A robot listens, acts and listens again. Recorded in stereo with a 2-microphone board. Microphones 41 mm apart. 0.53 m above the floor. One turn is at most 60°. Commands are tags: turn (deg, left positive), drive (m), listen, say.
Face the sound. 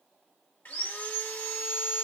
<turn deg="55"/>
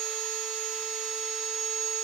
<turn deg="10"/>
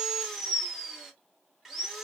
<say>Found it: sawing, straight ahead.</say>